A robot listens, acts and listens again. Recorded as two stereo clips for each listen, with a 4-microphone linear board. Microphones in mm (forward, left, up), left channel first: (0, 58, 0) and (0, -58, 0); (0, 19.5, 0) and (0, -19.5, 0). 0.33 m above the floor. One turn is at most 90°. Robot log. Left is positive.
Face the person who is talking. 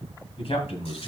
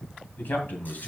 note: The man speaking: about 55° left or 125° left.
cmd yaw +55
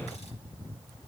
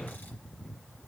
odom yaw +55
cmd idle
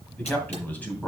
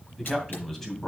note: So it is at 15° left.
cmd yaw +15
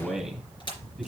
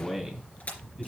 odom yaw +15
end: Facing the man speaking.